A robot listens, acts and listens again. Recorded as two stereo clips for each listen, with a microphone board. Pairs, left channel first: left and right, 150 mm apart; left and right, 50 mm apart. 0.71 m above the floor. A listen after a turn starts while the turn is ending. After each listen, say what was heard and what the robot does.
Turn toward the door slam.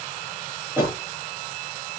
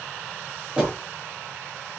Turn 30° right.
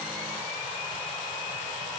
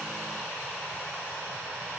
Keep listening.
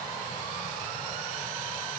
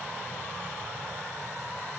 I heard a door slam, but can't make it out now. It was about 15° left or 135° right.